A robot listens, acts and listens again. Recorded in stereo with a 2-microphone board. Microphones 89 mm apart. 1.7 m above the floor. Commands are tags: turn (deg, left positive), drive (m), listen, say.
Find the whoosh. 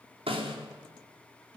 <listen/>
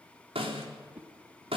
<turn deg="-15"/>
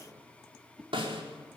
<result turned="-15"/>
<say>Found it: a whoosh, straight ahead.</say>